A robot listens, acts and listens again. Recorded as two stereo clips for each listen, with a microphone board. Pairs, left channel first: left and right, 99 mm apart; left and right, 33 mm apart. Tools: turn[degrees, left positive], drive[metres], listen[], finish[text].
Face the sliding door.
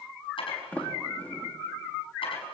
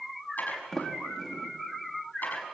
Thought: The sliding door: about 15° left or 165° left.
Action: turn[15]
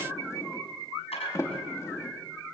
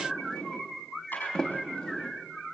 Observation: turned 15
Thought: So it is at 150° left.
Action: turn[150]
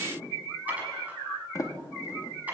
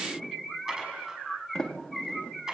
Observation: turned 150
Thought: The sliding door is now 30° left.
Action: turn[30]
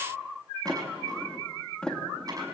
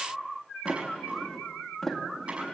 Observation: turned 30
Thought: The sliding door is now 10° left.
Action: turn[10]
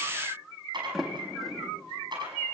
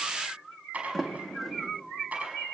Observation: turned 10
Action: finish[Found it: a sliding door, straight ahead, 2 to 4 m away.]